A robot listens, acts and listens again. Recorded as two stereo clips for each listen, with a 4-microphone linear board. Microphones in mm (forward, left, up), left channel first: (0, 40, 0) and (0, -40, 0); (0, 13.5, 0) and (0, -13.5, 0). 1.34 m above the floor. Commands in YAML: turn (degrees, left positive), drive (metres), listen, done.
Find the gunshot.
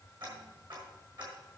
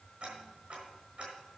listen: true
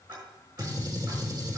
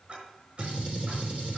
turn: -50
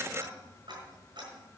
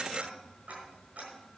listen: true
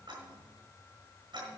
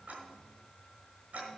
done: "I heard a gunshot, but can't make it out now. It was about straight ahead or 80° right."